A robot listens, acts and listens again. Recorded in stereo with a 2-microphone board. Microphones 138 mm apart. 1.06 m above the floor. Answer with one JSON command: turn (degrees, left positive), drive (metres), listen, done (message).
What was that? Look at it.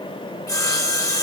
{"turn": 30}
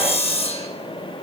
{"turn": 115}
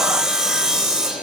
{"done": "Facing the sawing, 1 to 2 m away."}